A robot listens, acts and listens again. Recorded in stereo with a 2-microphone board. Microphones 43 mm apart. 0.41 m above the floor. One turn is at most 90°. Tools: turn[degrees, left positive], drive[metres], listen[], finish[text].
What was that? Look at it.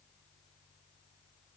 Action: listen[]
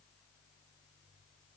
Action: listen[]
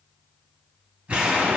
Thought: The explosion: about 30° right or 150° right.
Action: turn[-30]
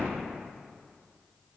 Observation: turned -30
Thought: So it is at 120° right.
Action: turn[-90]
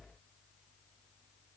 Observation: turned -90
Thought: Nothing new. It was at 30° right.
Action: turn[-30]
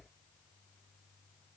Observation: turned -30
Action: finish[I heard an explosion from this way, but can't make it out now.]